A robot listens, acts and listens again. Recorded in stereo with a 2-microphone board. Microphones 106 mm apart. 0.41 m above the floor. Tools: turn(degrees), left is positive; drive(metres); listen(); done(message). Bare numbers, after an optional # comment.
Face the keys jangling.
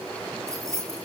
# The keys jangling: about 25° right or 155° right.
turn(-25)
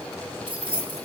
# So it is at 130° right.
turn(-130)
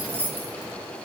# The keys jangling is now 20° right.
turn(-20)
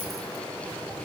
listen()
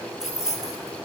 done("Facing the keys jangling, over 4 m away.")